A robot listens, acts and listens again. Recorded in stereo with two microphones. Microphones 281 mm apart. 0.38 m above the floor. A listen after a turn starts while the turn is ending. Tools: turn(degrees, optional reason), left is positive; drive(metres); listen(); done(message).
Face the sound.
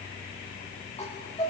turn(degrees=20, reason="The chime: about 20° left or 160° left.")
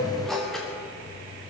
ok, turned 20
done("Facing the chime, over 4 m away.")